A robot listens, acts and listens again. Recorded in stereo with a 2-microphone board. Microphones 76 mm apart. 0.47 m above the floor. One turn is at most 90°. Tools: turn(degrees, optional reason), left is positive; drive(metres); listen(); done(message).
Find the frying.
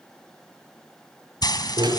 turn(degrees=65, reason="The frying: about 65° left or 115° left.")
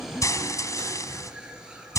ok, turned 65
turn(degrees=45, reason="So it is at 45° left.")
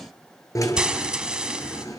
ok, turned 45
turn(degrees=-10, reason="The frying is now 10° right.")
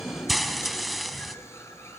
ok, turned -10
done("Facing the frying, 2 to 4 m away.")